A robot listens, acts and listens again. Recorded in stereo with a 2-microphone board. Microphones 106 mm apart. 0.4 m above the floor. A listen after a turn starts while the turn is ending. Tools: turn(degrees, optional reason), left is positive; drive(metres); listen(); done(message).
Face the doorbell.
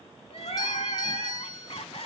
turn(degrees=35, reason="The doorbell: about 35° left or 145° left.")
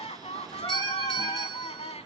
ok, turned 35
listen()
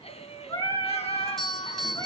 done("Facing the doorbell, 2 to 4 m away.")